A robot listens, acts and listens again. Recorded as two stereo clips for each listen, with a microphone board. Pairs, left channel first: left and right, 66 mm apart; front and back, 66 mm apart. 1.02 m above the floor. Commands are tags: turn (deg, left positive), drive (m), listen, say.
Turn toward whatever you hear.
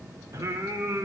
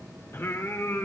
<turn deg="-45"/>
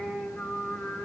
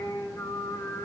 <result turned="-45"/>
<turn deg="20"/>
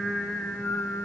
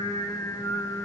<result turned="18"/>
<turn deg="15"/>
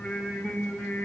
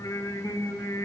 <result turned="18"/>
<turn deg="10"/>
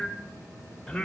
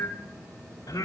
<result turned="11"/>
<turn deg="10"/>
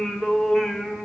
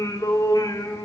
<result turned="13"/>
<say>Facing the singing.</say>